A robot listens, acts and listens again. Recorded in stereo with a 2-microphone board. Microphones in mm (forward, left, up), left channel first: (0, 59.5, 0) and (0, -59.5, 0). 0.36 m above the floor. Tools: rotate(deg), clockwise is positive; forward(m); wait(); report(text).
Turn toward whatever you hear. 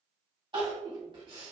rotate(40)
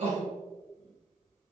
rotate(95)
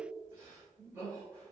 rotate(20)
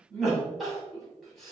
report("Found it: crying, straight ahead.")